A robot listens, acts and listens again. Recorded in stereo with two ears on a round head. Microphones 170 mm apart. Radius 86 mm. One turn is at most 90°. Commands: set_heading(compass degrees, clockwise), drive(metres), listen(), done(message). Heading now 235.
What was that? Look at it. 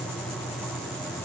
listen()
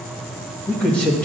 set_heading(205)
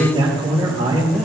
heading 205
set_heading(230)
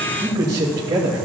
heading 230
set_heading(250)
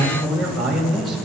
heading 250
done("Found it: a man speaking, straight ahead, 1 to 2 m away.")